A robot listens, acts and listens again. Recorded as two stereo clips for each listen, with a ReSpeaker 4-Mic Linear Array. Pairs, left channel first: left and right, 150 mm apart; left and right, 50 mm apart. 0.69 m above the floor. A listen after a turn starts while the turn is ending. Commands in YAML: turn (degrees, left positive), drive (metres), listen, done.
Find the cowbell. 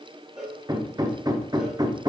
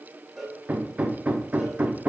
turn: -30
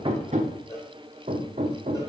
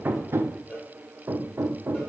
turn: 25
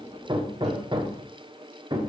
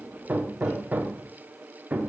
listen: true
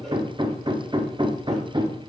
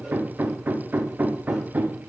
listen: true
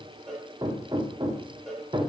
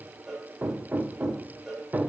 done: "Facing the cowbell."